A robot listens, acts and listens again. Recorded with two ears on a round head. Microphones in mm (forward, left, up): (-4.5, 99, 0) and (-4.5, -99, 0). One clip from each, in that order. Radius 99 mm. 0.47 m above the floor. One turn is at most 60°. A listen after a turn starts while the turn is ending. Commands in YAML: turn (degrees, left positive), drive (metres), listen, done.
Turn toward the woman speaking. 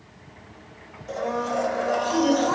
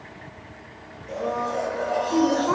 turn: -25
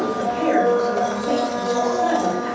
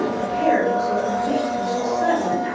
done: "Found it: a woman speaking, straight ahead."